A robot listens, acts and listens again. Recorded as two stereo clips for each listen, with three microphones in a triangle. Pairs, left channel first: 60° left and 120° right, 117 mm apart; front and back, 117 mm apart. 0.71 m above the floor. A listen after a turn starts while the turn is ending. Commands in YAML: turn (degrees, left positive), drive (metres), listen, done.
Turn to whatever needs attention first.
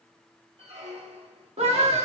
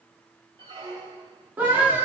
turn: -110
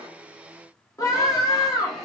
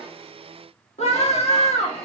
done: "Facing the scream, 1 to 2 m away."